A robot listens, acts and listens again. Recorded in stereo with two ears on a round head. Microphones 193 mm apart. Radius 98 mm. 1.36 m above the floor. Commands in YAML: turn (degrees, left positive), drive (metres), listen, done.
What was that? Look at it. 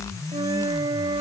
turn: -20
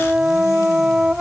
done: "Facing the flute."